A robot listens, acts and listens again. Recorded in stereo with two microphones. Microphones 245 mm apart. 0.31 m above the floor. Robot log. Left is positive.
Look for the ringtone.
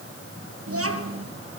cmd idle
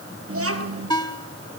note: The ringtone: about 15° left or 165° left.
cmd yaw +15
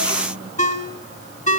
note: So it is at 150° left.
cmd yaw +150
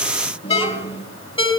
note: The ringtone is now 25° left.
cmd yaw +25
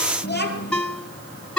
end: Found it: a ringtone, straight ahead.